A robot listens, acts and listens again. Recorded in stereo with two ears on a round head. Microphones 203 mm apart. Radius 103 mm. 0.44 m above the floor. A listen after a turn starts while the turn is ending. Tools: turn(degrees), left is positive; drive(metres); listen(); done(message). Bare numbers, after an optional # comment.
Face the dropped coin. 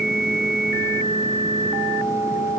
listen()
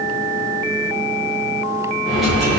turn(30)
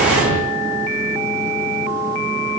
# So it is at 35° right.
turn(-35)
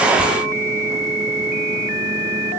done("I heard a dropped coin from this way, but can't make it out now.")